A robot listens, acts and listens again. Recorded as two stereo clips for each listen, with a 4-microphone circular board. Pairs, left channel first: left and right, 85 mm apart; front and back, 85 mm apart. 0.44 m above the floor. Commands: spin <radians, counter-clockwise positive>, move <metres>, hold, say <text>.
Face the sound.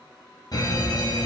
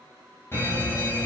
spin 0.96
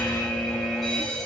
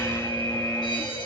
say Facing the fire alarm, over 4 m away.